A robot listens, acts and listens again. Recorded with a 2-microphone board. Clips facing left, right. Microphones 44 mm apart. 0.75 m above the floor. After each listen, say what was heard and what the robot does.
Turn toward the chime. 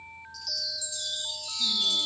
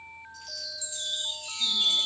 The chime: about 35° right or 145° right. Turn 35° right.
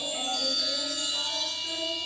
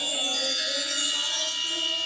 So it is at 105° right. Turn 105° right.
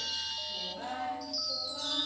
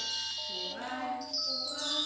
Found it: a chime, straight ahead.